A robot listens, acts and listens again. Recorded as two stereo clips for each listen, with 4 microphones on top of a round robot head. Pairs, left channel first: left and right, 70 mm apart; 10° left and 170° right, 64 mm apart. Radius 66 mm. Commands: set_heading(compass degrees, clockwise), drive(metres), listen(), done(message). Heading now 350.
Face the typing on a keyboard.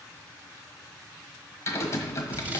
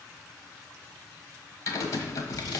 set_heading(305)
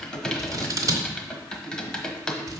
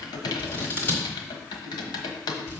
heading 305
set_heading(295)
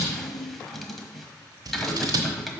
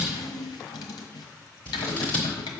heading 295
done("Found it: typing on a keyboard, straight ahead, 1 to 2 m away.")